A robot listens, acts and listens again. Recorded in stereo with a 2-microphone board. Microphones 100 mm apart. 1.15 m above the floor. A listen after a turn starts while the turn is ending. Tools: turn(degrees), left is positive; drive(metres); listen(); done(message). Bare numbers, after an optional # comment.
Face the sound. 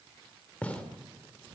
turn(30)
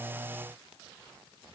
listen()
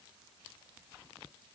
done("I heard a gunshot, but can't make it out now. It was about 15° right or 135° left.")